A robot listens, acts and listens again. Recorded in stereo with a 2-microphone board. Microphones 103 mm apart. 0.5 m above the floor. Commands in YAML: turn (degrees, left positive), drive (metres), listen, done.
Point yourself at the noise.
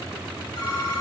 turn: 50
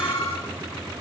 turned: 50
turn: 75
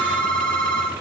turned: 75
turn: 15
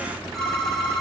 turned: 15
done: "Found it: a phone ringing, straight ahead, over 4 m away."